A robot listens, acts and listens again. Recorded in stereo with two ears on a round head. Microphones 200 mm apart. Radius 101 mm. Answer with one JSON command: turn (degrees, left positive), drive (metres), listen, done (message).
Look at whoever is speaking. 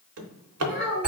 {"turn": -40}
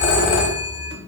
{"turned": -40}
{"listen": true}
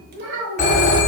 {"turn": -95}
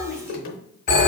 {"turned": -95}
{"done": "Facing the child speaking."}